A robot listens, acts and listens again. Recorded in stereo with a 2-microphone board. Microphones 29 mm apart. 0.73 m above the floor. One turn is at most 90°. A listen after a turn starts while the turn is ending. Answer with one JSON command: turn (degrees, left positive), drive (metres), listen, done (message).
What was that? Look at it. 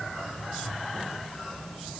{"listen": true}
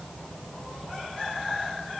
{"listen": true}
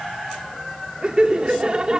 {"turn": -35}
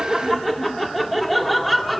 {"done": "Found it: laughter, straight ahead, 1 to 2 m away."}